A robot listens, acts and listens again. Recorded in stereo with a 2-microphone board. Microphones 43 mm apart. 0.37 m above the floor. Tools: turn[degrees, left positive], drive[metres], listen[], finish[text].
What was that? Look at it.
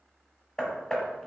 Action: turn[30]
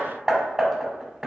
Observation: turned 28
Thought: So it is at 15° right.
Action: turn[-15]
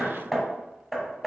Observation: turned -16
Action: finish[Found it: hammering, straight ahead.]